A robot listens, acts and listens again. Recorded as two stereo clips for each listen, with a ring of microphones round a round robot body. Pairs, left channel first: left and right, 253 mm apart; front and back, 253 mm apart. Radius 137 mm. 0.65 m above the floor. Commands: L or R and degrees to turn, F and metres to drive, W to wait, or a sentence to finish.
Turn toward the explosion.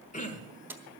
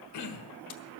W
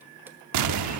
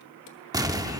R105
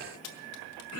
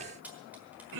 I heard an explosion from this way, but can't make it out now.